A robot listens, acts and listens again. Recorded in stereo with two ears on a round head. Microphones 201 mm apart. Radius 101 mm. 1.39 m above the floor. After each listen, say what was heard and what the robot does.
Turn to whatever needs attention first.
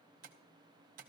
Keep listening.
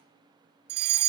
The fire alarm: about 50° right or 130° right. Turn 50° right.
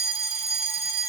So it is at 15° right. Turn 15° right.
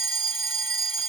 Found it: a fire alarm, straight ahead, 1 to 2 m away.